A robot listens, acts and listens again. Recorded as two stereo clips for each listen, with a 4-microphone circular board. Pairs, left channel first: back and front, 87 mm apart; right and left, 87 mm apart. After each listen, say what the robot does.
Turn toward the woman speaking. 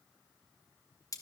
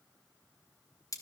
Keep listening.
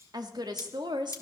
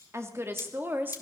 Turn 25° left.
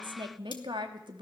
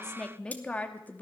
Turn 20° right.
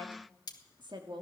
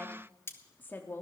Turn 25° right.
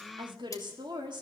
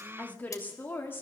Turn 25° right.
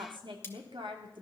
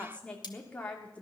Turn 15° right.
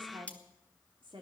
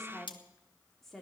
Facing the woman speaking, 2 to 4 m away.